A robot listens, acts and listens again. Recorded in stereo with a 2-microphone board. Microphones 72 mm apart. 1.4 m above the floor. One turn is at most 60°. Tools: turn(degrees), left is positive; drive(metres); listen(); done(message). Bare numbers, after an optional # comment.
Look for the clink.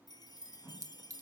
# The clink: about 45° right or 135° right.
turn(-45)
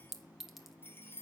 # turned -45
done("Found it: a clink, straight ahead.")